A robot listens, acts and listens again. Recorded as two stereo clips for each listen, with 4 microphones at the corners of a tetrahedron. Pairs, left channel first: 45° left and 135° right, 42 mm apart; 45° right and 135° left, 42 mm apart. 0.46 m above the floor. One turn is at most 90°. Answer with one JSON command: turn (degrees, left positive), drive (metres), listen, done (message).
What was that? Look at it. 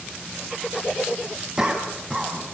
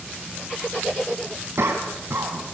{"turn": 90}
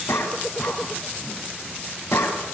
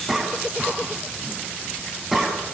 {"turn": 50}
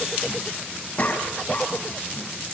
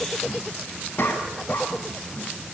{"turn": -10}
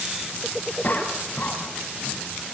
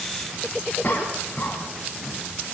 {"done": "Found it: a cough, straight ahead, 2 to 4 m away."}